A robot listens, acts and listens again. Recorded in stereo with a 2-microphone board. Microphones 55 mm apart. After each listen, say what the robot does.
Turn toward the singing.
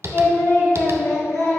Turn 65° left.
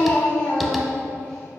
Turn 10° left.
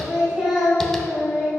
Turn 10° right.
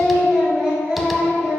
Facing the singing.